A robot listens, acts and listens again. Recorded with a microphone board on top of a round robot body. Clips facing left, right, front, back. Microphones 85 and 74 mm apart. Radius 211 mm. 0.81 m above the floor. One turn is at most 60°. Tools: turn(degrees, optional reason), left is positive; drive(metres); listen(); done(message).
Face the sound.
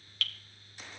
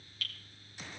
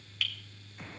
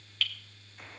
turn(degrees=60, reason="The dripping: 85° left.")
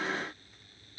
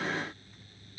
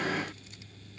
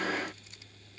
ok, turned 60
turn(degrees=25, reason="The dripping is now 25° left.")
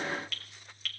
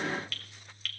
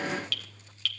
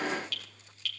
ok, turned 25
done("Found it: dripping, straight ahead.")